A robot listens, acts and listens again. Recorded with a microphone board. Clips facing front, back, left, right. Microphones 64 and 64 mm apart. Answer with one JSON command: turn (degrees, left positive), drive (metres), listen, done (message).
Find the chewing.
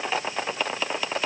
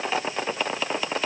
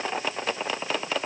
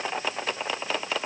{"listen": true}
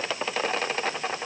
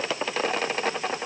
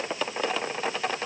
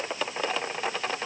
{"listen": true}
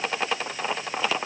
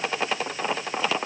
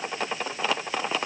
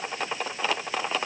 {"done": "I can't make out chewing to turn to."}